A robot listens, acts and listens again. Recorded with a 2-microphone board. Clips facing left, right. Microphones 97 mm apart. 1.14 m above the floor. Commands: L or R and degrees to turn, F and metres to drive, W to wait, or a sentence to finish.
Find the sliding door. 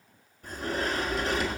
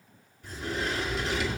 L50
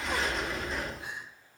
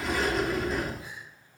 Facing the sliding door.